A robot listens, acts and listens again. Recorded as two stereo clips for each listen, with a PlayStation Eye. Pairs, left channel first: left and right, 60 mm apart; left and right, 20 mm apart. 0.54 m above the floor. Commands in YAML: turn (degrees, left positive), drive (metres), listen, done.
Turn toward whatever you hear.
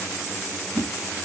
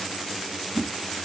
turn: -75
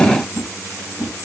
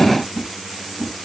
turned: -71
turn: -35
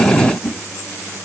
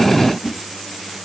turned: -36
done: "Found it: a whoosh, straight ahead, 2 to 4 m away."